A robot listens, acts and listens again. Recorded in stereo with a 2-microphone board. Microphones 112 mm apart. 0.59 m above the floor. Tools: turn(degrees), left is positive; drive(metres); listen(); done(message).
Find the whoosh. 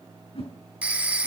turn(degrees=60)
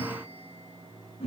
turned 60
turn(degrees=65)
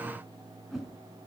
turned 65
done("Found it: a whoosh, straight ahead, over 4 m away.")